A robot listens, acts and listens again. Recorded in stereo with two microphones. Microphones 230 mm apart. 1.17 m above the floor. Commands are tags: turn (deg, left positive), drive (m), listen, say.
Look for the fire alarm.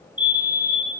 <turn deg="20"/>
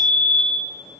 <say>Found it: a fire alarm, straight ahead, over 4 m away.</say>